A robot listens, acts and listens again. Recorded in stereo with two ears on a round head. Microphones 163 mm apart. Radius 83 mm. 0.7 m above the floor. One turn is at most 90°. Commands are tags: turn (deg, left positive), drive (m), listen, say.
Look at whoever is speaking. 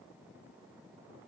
<listen/>
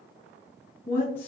<turn deg="30"/>
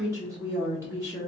<turn deg="-15"/>
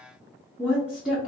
<say>Facing the woman speaking, 1 to 2 m away.</say>